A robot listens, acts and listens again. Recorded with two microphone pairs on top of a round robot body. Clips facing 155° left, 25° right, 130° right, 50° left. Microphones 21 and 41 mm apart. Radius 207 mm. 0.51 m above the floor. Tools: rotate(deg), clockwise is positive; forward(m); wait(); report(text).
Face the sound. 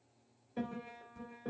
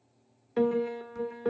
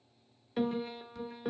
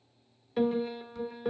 rotate(40)
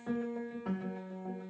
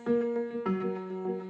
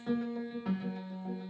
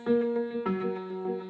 rotate(-10)
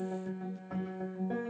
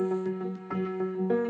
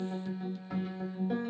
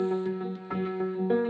report("Found it: a piano, straight ahead, 1 to 2 m away.")